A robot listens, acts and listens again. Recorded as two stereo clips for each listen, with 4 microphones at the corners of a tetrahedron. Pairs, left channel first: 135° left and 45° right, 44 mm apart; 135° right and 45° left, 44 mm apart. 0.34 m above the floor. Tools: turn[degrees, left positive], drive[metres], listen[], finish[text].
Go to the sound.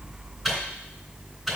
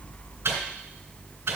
Thought: The microwave: 35° left.
Action: turn[35]
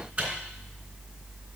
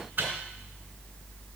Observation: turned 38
Action: drive[1.0]
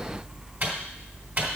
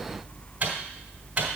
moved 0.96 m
Thought: The microwave is now 10° right.
Action: turn[-10]
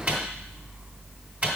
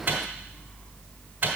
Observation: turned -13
Action: drive[1.0]
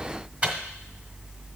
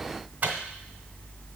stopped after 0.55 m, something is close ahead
Action: finish[Arrived at the microwave, straight ahead.]